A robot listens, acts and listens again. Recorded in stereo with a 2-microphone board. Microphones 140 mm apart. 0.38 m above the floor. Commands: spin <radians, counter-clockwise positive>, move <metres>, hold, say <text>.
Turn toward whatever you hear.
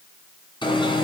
spin 0.61
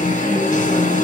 spin 1.92
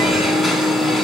say Found it: an alarm, straight ahead.